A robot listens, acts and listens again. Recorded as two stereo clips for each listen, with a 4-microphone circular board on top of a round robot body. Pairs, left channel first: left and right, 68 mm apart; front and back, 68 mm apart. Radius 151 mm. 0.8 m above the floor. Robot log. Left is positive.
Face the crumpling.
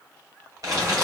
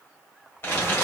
note: The crumpling: 55° right.
cmd yaw -55
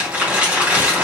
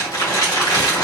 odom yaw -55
note: The crumpling is now 20° right.
cmd yaw -20
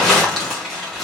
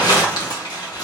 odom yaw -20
end: Facing the crumpling.